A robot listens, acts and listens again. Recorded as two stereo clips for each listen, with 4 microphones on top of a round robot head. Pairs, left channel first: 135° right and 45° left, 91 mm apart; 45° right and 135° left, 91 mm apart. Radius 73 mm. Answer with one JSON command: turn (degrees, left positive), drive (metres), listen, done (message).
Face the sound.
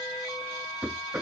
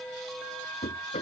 {"turn": -30}
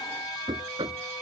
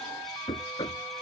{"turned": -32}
{"done": "Facing the knocking."}